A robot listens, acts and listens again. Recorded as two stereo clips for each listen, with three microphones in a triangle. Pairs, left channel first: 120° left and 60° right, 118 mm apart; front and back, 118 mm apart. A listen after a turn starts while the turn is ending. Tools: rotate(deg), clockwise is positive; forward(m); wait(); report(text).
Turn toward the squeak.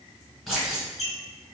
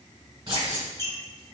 rotate(-125)
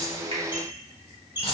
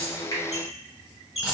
rotate(-10)
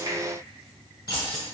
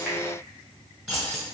wait()
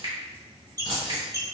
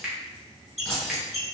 report("Facing the squeak.")